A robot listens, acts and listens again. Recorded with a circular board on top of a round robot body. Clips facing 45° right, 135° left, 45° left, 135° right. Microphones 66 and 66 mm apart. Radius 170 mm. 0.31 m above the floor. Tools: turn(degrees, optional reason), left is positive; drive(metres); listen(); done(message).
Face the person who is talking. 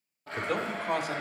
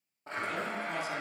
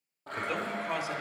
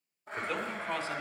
turn(degrees=-35, reason="The man speaking: 35° right.")
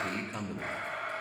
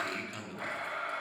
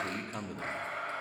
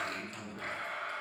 turn(degrees=20, reason="The man speaking is now 20° left.")
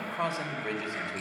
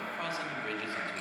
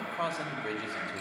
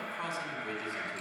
turn(degrees=25, reason="The man speaking is now 25° left.")
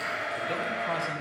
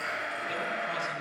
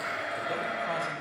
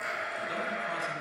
listen()
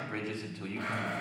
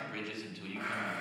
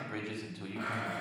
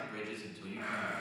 turn(degrees=20, reason="The man speaking is now 20° left.")
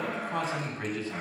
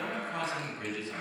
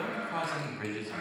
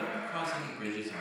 done("Found it: a man speaking, straight ahead, 2 to 4 m away.")